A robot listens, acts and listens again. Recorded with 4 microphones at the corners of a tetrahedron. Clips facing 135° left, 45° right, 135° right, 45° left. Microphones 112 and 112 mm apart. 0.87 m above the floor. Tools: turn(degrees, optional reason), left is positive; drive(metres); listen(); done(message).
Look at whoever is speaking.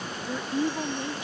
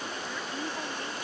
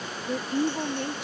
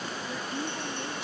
turn(degrees=-160, reason="The woman speaking: 160° right.")
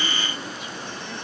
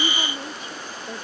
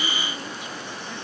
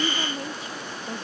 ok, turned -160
listen()
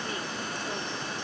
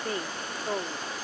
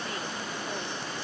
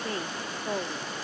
done("Found it: a woman speaking, straight ahead.")